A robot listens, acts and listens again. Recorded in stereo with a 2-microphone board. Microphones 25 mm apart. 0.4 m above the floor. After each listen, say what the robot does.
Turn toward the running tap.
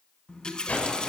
Turn 40° left.
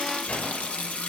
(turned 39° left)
Turn 100° left.
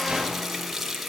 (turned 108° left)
Turn 10° right.
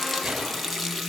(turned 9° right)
Found it: a running tap, straight ahead, 2 to 4 m away.